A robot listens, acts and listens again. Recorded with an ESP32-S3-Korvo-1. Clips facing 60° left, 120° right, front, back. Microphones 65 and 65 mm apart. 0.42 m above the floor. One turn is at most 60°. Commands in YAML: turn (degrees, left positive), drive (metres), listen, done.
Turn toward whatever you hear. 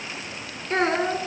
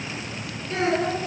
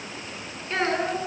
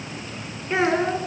turn: 60
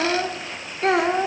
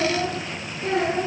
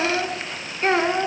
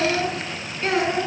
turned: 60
turn: 55
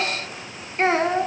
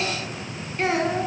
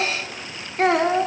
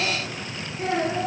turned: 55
done: "Found it: a child speaking, straight ahead."